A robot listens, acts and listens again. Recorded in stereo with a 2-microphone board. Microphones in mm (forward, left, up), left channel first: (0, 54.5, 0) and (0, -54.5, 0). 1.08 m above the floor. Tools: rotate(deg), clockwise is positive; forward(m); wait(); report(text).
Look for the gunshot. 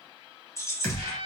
rotate(-25)
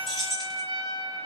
wait()
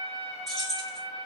report("I heard a gunshot, but can't make it out now. It was about straight ahead or 130° left.")